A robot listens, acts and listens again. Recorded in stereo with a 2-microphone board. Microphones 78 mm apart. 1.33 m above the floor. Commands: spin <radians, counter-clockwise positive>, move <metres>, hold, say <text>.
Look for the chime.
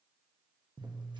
hold
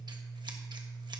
hold
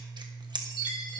spin 1.22
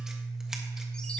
hold
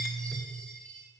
spin 0.26
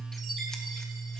hold
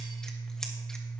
hold
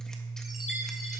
say I heard a chime from this way, but can't make it out now.